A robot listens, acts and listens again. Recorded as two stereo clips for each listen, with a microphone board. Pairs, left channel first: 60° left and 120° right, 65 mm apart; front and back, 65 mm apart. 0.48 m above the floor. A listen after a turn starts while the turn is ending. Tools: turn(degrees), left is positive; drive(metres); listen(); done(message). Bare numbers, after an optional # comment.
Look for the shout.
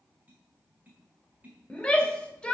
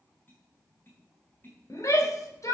# The shout: 10° right.
turn(-10)
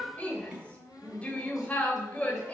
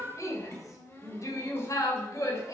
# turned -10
done("Found it: a shout, straight ahead.")